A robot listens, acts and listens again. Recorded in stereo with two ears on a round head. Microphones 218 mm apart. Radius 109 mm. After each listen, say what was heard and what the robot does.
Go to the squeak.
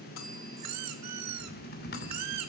Turn 90° right.
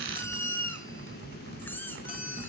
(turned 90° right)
So it is at 10° left. Turn 10° left.
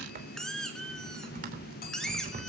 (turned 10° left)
Drive 1.0 m forward.
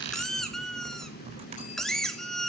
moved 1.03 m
Drive 1.0 m forward.
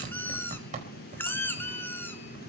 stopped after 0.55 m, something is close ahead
The squeak is now 10° left. Turn 10° left.
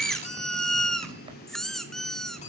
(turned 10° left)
Arrived at the squeak, straight ahead.